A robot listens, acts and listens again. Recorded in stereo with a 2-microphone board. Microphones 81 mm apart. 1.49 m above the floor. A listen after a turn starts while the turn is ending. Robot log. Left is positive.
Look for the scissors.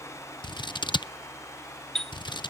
note: The scissors: about 70° left or 110° left.
cmd yaw +70
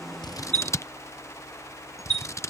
note: So it is at 40° left.
cmd yaw +40
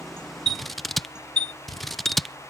end: Found it: scissors, straight ahead.